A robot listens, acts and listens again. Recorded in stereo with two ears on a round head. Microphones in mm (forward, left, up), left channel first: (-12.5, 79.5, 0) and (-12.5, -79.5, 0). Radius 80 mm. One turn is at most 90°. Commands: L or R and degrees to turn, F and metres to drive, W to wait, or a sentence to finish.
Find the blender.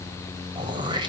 W
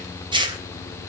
W
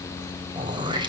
I can't make out a blender to turn to.